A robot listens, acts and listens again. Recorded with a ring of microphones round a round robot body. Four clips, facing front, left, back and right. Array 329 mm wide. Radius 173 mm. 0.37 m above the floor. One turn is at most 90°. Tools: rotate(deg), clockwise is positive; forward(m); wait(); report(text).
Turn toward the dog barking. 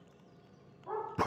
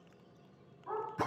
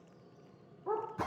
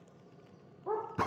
rotate(90)
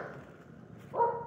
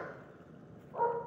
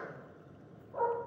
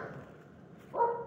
rotate(35)
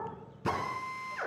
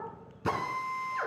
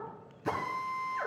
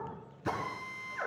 report("Facing the dog barking.")